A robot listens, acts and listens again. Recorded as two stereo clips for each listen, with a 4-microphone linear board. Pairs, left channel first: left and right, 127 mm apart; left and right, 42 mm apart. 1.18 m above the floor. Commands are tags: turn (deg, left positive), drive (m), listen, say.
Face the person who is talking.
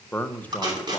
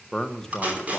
<turn deg="30"/>
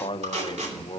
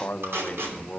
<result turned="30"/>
<turn deg="135"/>
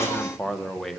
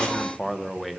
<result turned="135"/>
<say>Found it: a man speaking, straight ahead, under 1 m away.</say>